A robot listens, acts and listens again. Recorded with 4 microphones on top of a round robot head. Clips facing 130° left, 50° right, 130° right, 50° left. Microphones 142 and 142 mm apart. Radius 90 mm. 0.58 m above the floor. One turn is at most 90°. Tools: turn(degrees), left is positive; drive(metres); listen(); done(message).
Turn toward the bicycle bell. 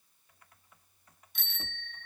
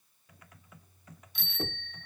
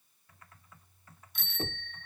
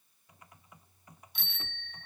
turn(degrees=90)
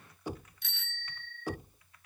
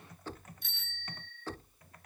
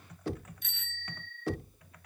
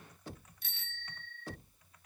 turn(degrees=90)
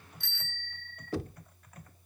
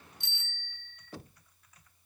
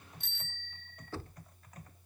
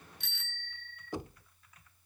turn(degrees=20)
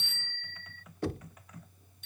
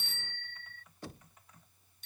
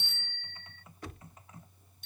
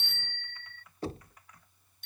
done("Found it: a bicycle bell, straight ahead.")